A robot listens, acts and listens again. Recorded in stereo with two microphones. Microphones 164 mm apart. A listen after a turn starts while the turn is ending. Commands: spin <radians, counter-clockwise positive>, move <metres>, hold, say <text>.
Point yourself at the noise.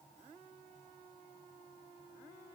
hold
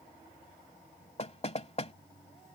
spin 0.70
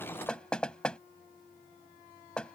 say Facing the knocking.